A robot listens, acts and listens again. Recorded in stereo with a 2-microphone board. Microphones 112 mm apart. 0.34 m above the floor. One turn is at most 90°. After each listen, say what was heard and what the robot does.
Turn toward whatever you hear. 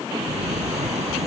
Turn 90° right.
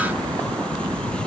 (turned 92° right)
So it is at 10° left. Turn 10° left.
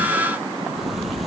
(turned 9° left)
Facing the sliding door.